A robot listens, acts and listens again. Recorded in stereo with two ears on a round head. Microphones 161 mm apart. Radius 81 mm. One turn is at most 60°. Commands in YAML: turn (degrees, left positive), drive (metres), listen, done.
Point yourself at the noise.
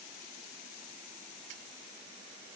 listen: true
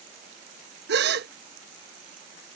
turn: -60
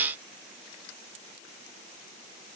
listen: true
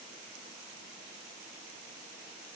done: "I heard a gasp, but can't make it out now. It was about straight ahead or 60° right."